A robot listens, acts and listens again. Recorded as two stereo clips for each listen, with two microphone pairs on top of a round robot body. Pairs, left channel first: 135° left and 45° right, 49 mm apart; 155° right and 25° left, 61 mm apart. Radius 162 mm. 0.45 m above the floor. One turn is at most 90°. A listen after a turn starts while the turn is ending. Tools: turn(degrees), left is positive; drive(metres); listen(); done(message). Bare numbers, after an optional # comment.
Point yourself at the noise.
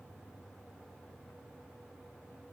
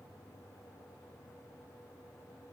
listen()
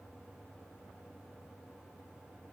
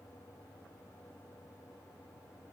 listen()
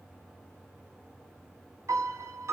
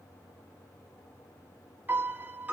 # The piano: 35° right.
turn(-35)
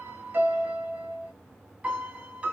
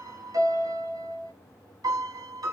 # The piano is now 20° left.
turn(20)
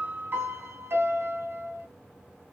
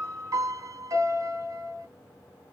done("Facing the piano, 1 to 2 m away.")